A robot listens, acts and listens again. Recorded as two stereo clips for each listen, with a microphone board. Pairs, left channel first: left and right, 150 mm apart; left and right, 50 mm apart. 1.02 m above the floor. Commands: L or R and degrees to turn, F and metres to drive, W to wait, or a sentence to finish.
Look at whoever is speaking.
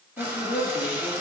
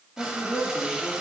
L90
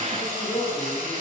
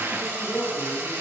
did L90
L15
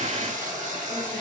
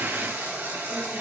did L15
W
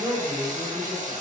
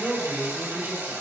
L15
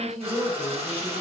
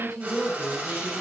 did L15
Found it: a woman speaking, straight ahead.